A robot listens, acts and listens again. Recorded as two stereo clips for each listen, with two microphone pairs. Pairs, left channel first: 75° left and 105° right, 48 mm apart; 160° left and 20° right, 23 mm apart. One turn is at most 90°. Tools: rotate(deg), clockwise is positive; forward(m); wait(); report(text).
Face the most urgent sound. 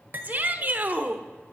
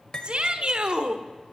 rotate(55)
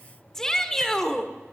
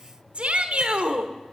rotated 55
report("Found it: a shout, straight ahead.")